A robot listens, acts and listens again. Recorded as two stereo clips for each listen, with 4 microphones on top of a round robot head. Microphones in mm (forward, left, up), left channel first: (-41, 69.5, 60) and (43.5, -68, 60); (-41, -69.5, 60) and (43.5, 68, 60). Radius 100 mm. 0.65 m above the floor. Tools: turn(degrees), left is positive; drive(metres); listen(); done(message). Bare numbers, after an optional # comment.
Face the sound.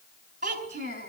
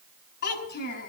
# The child speaking: 105° right.
turn(-105)
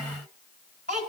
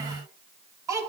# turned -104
# The child speaking is now 15° right.
turn(-15)
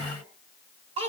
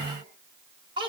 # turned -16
done("Found it: a child speaking, straight ahead.")